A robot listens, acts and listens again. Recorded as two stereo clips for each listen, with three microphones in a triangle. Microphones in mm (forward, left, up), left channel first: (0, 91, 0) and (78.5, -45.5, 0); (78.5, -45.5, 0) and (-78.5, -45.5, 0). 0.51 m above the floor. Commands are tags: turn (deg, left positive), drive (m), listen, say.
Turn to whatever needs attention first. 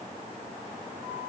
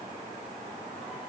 <listen/>
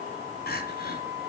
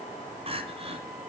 <turn deg="130"/>
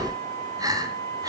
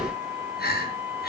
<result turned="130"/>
<say>Found it: crying, straight ahead.</say>